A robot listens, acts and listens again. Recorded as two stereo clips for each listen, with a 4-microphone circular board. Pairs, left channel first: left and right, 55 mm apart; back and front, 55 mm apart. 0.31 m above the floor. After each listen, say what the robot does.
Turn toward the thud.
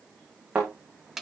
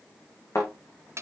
Turn 160° right.
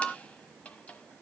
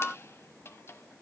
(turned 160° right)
I heard a thud from this way, but can't make it out now.